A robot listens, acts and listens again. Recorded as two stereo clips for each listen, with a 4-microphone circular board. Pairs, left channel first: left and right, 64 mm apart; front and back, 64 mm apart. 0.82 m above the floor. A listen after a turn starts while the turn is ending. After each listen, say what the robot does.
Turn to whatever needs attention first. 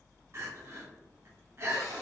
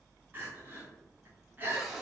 Turn 130° right.
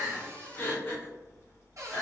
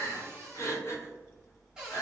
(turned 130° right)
Turn 35° left.
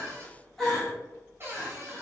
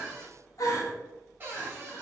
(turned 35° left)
Facing the crying, 1 to 2 m away.